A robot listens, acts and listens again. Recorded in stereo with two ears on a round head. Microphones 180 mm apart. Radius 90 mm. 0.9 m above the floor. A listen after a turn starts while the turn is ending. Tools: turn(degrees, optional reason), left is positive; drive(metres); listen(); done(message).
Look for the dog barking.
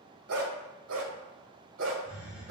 turn(degrees=-65, reason="The dog barking: about 65° right or 115° right.")
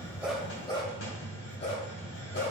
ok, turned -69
turn(degrees=40, reason="So it is at 40° left.")
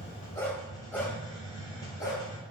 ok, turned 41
turn(degrees=15, reason="The dog barking is now 15° left.")
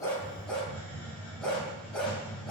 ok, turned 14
done("Facing the dog barking, 2 to 4 m away.")